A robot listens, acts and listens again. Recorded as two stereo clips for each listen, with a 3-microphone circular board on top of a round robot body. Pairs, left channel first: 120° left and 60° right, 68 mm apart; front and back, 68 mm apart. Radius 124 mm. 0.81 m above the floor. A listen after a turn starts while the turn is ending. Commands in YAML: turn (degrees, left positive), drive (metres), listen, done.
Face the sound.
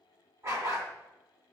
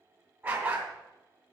turn: -110
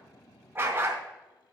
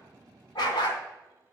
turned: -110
done: "Facing the dog barking."